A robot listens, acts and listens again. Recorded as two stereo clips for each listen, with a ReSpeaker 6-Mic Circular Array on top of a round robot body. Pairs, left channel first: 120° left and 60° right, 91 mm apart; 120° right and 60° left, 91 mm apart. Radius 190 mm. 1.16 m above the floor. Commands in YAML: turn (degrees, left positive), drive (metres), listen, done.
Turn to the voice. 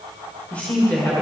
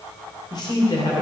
turn: -165
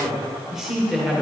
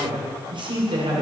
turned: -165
turn: 25
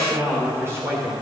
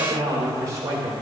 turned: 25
done: "Facing the man speaking, 2 to 4 m away."